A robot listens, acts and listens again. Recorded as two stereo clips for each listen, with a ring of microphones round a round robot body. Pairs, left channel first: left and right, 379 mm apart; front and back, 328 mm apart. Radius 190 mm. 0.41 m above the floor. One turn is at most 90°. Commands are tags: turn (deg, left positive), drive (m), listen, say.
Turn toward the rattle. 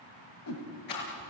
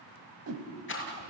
<turn deg="55"/>
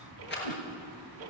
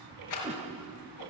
<turn deg="25"/>
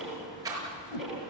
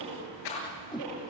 <turn deg="-10"/>
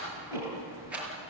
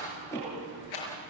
<say>Found it: a rattle, straight ahead.</say>